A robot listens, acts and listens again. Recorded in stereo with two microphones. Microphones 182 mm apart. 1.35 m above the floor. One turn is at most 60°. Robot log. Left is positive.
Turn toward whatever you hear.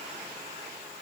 cmd idle
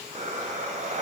note: The breathing: about 40° right or 140° right.
cmd yaw -40
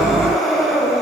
end: Facing the breathing.